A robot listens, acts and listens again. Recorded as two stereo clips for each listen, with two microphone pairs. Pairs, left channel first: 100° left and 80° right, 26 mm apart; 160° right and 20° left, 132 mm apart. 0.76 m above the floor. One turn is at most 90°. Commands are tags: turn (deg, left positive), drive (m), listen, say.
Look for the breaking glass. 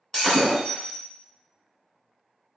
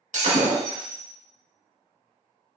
<turn deg="25"/>
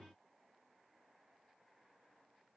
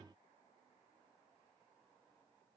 <say>Facing where the breaking glass came from. I can't hear it now.</say>